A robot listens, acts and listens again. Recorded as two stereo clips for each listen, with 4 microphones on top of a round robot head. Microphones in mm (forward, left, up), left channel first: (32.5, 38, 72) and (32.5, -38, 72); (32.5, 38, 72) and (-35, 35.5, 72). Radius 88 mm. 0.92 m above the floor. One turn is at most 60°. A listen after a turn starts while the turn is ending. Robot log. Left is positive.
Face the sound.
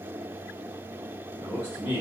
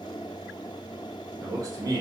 note: The man speaking: 155° right.
cmd yaw -60
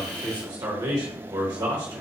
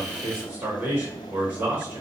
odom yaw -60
note: The man speaking is now 115° right.
cmd yaw -60
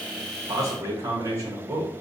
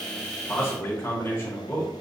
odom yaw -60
note: The man speaking is now 50° right.
cmd yaw -50
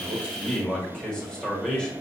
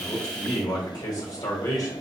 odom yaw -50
note: The man speaking is now 10° left.
cmd yaw +10
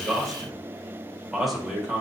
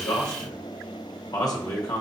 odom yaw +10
end: Found it: a man speaking, straight ahead, 1 to 2 m away.